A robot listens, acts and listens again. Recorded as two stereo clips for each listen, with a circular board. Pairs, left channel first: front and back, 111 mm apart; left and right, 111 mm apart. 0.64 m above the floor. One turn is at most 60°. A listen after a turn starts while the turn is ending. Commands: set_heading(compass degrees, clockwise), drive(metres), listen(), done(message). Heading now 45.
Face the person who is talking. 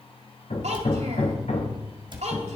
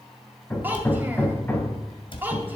set_heading(105)
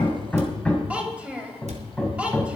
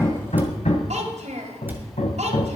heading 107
set_heading(167)
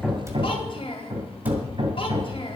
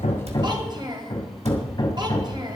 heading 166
set_heading(206)
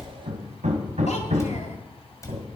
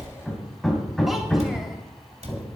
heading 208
listen()
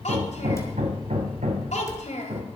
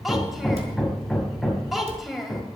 done("Facing the child speaking.")